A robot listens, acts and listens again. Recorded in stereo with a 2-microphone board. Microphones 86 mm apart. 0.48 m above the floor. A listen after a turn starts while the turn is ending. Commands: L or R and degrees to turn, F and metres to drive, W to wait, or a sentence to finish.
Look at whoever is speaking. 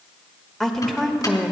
L30
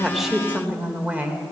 R20
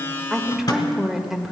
Found it: a woman speaking, straight ahead, 1 to 2 m away.